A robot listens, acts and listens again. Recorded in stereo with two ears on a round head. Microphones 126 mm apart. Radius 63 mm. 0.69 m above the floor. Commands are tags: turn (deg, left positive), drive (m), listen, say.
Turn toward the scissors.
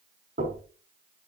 <listen/>
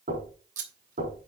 <turn deg="-55"/>
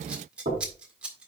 <turn deg="-10"/>
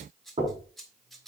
<say>Found it: scissors, straight ahead.</say>